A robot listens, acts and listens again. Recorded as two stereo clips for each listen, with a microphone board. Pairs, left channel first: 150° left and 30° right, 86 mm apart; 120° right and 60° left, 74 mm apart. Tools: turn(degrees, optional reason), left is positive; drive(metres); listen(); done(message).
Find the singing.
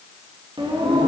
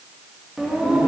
turn(degrees=-25, reason="The singing: 25° right.")
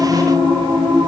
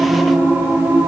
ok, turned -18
done("Found it: singing, straight ahead.")